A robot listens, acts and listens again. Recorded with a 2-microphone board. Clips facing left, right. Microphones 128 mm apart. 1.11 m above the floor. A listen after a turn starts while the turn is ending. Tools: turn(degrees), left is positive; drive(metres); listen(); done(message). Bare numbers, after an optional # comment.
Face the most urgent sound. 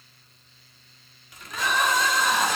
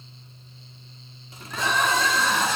turn(30)
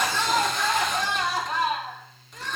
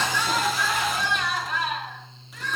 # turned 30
# So it is at 140° left.
turn(140)
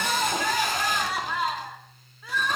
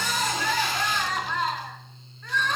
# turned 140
# The crying is now 10° left.
turn(10)
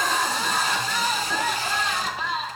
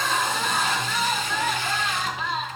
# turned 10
done("Facing the crying, 2 to 4 m away.")